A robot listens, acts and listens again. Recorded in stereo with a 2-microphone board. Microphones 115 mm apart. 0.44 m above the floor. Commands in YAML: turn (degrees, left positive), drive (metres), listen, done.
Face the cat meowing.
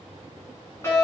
listen: true
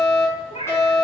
turn: 70
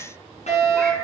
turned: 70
listen: true
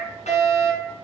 listen: true
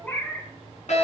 turn: 15
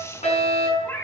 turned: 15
turn: 15
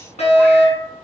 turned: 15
listen: true
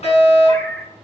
turn: 10
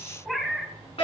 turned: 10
done: "Facing the cat meowing."